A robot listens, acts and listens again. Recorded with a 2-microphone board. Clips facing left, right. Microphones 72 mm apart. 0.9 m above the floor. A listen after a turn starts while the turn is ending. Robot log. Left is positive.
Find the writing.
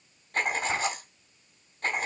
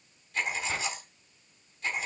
note: The writing: about 50° left or 130° left.
cmd yaw +50
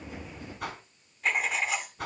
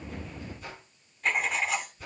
end: Found it: writing, straight ahead.